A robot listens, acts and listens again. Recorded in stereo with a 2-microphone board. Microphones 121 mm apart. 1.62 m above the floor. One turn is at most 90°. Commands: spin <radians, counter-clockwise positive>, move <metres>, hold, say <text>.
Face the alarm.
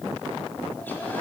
hold
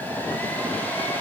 hold
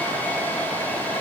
say I can't make out an alarm to turn to.